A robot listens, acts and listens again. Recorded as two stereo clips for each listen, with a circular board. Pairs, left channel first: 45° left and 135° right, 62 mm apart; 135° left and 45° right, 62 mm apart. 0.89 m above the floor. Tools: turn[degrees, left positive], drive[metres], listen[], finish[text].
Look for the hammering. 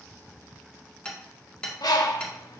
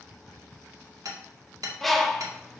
Thought: The hammering: 30° right.
Action: turn[-30]
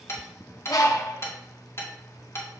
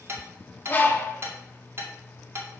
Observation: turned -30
Action: finish[Facing the hammering, 2 to 4 m away.]